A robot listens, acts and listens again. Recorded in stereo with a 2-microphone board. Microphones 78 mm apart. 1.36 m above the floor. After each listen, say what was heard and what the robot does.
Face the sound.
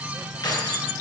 The keys jangling: about 60° left or 120° left. Turn 60° left.
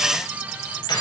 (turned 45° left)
So it is at 65° left. Turn 65° left.
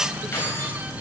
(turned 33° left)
The keys jangling is now 30° left. Turn 30° left.
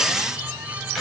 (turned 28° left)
Found it: keys jangling, straight ahead.